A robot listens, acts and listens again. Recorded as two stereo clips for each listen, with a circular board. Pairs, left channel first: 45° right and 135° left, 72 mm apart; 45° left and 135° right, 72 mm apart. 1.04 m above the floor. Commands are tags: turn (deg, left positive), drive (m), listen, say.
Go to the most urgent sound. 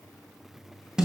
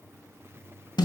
<listen/>
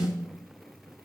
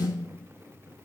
<listen/>
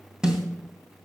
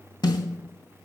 <say>I can't make out anything urgent, only a snare drum.</say>